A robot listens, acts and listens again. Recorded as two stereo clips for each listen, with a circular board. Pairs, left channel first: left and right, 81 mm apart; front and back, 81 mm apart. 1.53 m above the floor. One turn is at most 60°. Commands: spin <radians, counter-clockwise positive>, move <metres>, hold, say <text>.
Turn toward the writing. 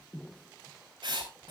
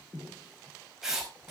spin -1.05
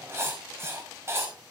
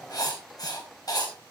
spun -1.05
spin -0.61
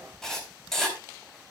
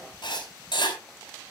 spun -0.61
say Facing the writing, 2 to 4 m away.